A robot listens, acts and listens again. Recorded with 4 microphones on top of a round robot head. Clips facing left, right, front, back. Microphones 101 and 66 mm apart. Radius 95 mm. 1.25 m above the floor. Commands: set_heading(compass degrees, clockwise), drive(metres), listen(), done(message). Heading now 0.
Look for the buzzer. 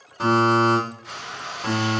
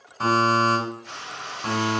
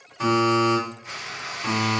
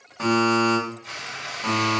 set_heading(215)
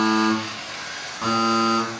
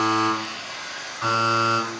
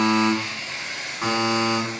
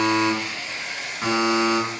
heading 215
set_heading(145)
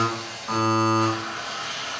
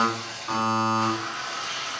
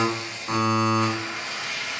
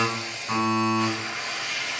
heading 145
set_heading(120)
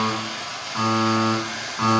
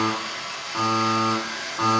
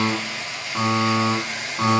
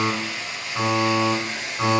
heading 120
set_heading(135)
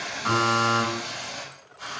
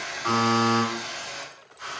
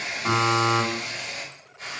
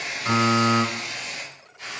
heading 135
done("Found it: a buzzer, straight ahead.")